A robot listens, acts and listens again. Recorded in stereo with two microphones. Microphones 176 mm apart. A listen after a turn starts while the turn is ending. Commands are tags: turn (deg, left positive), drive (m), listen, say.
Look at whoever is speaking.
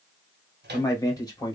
<turn deg="25"/>
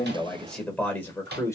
<turn deg="15"/>
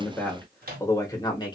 <turn deg="25"/>
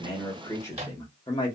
<turn deg="25"/>
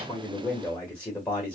<turn deg="10"/>
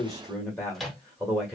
<say>Found it: a man speaking, straight ahead.</say>